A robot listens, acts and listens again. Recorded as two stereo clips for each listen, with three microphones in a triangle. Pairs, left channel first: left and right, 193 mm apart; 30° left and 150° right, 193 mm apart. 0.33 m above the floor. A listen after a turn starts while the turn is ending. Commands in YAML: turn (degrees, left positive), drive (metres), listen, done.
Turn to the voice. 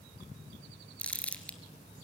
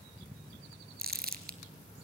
listen: true
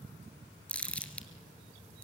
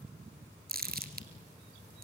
listen: true
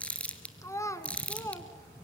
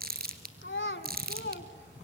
turn: 15
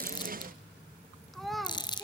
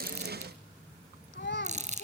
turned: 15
done: "Found it: a child speaking, straight ahead."